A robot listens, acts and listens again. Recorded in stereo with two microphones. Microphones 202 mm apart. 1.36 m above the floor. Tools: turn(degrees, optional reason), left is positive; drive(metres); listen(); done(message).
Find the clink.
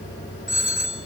listen()
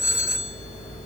listen()
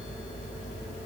done("I can't make out a clink, only a phone ringing.")